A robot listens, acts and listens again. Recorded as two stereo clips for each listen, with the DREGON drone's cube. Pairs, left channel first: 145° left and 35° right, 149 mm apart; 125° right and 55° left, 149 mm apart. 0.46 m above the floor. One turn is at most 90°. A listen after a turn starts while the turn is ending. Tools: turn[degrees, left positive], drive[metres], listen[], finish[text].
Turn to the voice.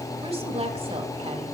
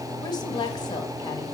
Thought: The woman speaking: 70° right.
Action: turn[-70]
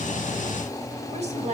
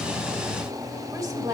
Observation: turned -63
Action: finish[Found it: a woman speaking, straight ahead, 1 to 2 m away.]